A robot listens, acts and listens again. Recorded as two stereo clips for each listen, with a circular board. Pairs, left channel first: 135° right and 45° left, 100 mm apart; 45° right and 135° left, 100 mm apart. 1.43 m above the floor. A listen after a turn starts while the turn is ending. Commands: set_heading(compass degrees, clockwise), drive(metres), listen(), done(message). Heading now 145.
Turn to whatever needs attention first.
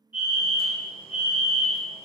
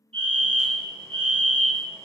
set_heading(30)
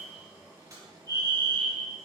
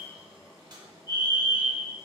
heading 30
set_heading(40)
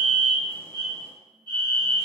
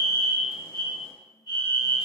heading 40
done("Facing the fire alarm.")